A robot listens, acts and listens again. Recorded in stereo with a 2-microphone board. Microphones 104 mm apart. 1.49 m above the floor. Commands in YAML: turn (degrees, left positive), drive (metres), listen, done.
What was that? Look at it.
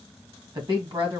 turn: -40
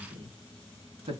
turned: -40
turn: -100
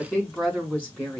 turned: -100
turn: 10
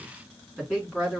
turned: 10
done: "Facing the woman speaking, 2 to 4 m away."